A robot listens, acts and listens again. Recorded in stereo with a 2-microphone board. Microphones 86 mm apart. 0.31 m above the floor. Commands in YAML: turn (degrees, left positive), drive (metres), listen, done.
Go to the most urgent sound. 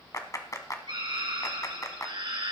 turn: -75
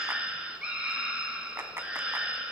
turn: -15
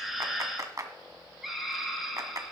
drive: 1.0
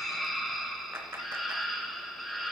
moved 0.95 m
drive: 1.0
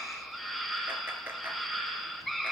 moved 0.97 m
drive: 1.0
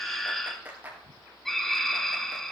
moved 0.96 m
drive: 1.0
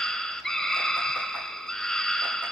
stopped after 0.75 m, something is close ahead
turn: 10
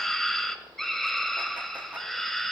done: "Arrived at the scream, straight ahead."